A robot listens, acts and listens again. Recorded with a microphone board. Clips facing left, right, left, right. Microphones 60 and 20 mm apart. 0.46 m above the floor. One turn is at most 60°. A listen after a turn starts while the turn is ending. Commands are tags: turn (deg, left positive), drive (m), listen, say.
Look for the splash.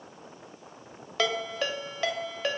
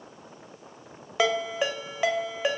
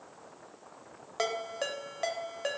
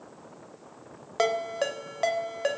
<listen/>
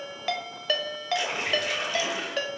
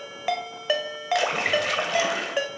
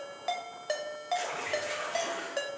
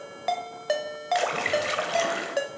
<turn deg="-60"/>
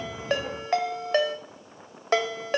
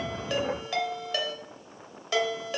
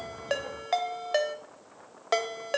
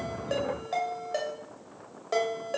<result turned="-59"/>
<turn deg="-30"/>
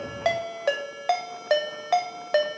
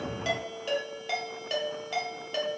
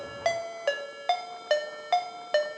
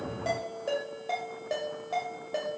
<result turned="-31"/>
<say>I heard a splash from this way, but can't make it out now.</say>